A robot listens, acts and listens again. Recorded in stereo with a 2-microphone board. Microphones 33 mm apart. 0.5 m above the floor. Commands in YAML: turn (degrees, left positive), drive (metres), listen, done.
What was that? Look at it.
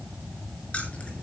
turn: 35
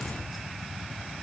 listen: true
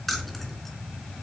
done: "Found it: keys jangling, straight ahead, over 4 m away."